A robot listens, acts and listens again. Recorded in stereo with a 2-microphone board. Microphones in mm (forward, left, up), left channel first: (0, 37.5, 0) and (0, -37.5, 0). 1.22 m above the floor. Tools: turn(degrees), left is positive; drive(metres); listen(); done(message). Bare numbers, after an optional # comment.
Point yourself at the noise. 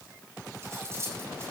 # The cutlery clinking: about 35° right or 145° right.
turn(-35)
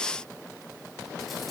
listen()
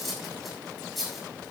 done("Found it: cutlery clinking, straight ahead.")